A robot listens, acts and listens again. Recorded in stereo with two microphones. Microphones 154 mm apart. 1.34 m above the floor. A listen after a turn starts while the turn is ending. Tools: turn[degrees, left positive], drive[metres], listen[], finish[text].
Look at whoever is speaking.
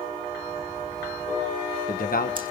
Thought: The man speaking: about 70° left or 110° left.
Action: turn[70]
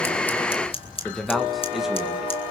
Action: finish[Facing the man speaking.]